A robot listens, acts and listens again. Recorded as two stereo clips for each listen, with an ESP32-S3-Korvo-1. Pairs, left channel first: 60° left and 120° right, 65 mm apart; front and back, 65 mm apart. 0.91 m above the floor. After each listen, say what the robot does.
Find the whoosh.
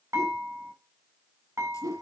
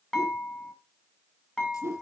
Turn 140° right.
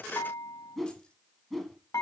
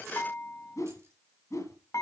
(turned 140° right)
Turn 30° right.
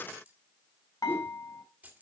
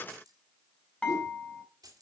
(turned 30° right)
Keep listening.
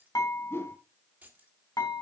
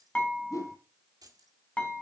Turn 10° left.
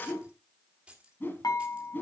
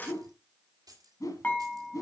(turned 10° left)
Facing the whoosh.